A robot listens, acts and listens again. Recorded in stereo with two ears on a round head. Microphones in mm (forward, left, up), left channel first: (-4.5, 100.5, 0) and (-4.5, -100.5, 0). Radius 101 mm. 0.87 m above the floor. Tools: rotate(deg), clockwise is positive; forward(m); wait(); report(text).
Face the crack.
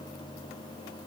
wait()
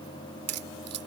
rotate(75)
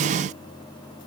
wait()
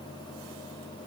report("I heard a crack, but can't make it out now. It was about straight ahead or 30° right.")